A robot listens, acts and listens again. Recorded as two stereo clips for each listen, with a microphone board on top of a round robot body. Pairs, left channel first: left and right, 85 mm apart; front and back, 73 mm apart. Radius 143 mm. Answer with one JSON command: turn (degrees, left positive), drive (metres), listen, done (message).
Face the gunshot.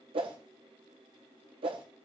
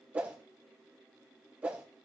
{"listen": true}
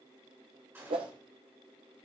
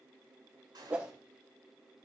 {"turn": -155}
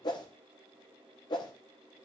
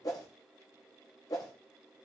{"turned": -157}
{"done": "Facing where the gunshot came from. I can't hear it now."}